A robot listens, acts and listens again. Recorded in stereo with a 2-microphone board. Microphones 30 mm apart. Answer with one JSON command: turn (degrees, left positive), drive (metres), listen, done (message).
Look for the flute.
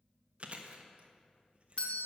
{"listen": true}
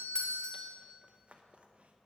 {"listen": true}
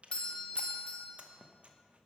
{"done": "I can't make out a flute to turn to."}